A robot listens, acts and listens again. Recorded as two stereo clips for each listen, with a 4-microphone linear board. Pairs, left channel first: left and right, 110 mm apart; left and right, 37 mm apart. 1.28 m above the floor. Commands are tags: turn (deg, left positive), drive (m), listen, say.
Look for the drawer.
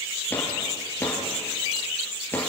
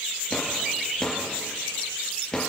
<turn deg="20"/>
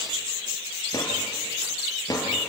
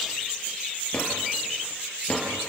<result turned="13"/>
<turn deg="145"/>
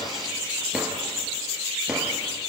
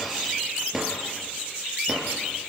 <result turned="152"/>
<say>Facing the drawer.</say>